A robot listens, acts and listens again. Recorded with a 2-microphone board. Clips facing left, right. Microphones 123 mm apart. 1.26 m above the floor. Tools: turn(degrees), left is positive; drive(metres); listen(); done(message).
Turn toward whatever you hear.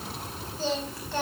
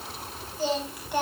turn(degrees=-30)
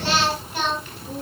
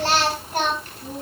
turn(degrees=-135)
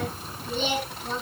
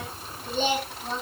turn(degrees=-40)
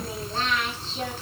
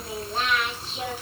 turn(degrees=-10)
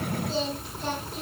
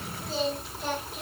done("Facing the singing, over 4 m away.")